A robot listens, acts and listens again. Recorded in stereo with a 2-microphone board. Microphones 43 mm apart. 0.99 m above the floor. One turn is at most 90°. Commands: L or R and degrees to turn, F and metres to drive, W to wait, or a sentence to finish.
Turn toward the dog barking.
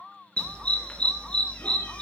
L20
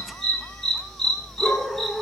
Found it: a dog barking, straight ahead, 2 to 4 m away.